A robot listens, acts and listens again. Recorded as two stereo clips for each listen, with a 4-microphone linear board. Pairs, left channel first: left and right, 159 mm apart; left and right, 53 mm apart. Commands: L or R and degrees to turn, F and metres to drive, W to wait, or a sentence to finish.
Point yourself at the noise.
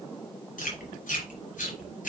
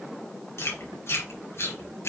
L55
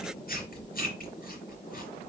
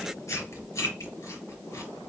L65
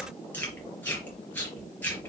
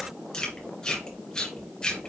L10
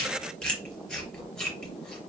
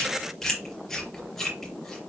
Found it: chewing, straight ahead.